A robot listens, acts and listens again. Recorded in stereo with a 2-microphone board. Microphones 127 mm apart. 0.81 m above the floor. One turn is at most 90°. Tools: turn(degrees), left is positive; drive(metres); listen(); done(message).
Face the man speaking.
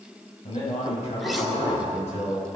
turn(degrees=60)
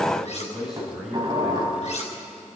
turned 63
done("Found it: a man speaking, straight ahead, over 4 m away.")